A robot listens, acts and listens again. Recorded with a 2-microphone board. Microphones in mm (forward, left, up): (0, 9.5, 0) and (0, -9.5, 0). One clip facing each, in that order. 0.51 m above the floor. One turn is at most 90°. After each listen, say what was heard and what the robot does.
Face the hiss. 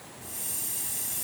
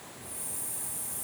The hiss: about 70° left or 110° left. Turn 70° left.
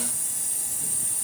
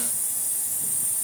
So it is at 20° left. Turn 20° left.
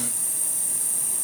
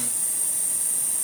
Facing the hiss.